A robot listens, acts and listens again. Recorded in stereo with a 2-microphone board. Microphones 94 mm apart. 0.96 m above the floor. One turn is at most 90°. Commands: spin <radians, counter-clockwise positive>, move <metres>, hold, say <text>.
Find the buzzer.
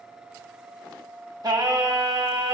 hold
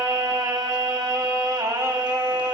hold
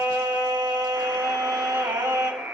spin -0.35
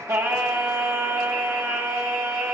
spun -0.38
hold
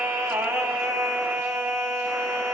hold
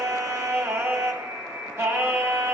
spin -1.57
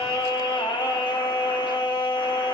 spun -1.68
spin -0.79
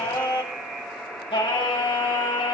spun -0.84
say Facing the buzzer.